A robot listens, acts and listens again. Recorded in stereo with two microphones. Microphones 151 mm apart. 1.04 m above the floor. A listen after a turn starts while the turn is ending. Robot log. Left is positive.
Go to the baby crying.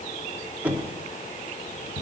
cmd idle
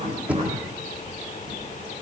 cmd idle
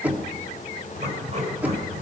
end: I can't make out a baby crying, only knocking and writing.